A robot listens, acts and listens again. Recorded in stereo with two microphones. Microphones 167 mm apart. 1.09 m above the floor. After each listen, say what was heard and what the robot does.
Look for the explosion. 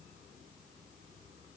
Keep listening.
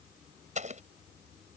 The explosion: about 45° right or 135° right. Turn 45° right.
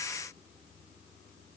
Keep listening.
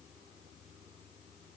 I heard an explosion, but can't make it out now. It was about straight ahead or 90° right.